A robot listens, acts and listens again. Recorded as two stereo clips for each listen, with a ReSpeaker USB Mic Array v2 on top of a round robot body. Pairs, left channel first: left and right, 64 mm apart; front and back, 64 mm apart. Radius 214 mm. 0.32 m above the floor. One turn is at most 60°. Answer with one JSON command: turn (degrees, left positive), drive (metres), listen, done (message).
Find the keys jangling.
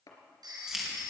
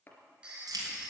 {"turn": -60}
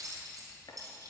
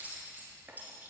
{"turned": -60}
{"turn": -60}
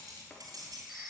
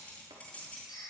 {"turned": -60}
{"turn": -60}
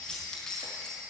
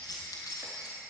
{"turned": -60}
{"turn": 10}
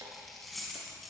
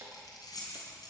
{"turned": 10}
{"done": "Facing the keys jangling."}